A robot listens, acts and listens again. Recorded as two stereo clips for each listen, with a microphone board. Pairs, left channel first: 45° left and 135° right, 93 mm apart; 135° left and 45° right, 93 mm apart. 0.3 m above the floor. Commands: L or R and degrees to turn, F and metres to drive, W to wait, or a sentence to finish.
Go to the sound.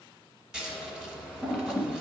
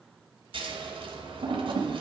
R50
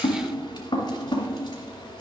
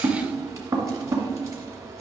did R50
F1.0
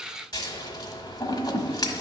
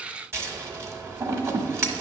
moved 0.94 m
L10
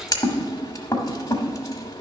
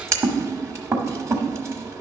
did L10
F1.0
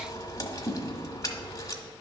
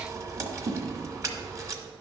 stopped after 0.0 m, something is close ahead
I am next to the scissors.